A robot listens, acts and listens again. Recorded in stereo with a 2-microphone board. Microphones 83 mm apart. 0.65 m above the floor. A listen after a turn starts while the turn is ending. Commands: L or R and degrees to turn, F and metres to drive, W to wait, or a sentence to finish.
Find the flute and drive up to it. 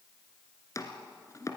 W
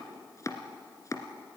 W
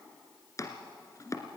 I can't make out a flute to turn to.